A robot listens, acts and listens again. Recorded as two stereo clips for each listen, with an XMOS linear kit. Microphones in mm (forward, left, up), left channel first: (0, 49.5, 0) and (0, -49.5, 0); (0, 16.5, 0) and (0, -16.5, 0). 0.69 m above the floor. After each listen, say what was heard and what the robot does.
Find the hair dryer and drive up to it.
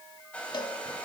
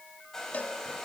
Turn 30° left.
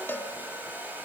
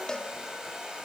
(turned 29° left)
So it is at 20° right. Turn 20° right.
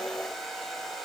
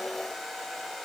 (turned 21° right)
Drive 1.0 m forward.
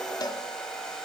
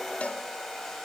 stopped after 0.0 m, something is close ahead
Something is in my way. I am facing the hair dryer but have not reached it.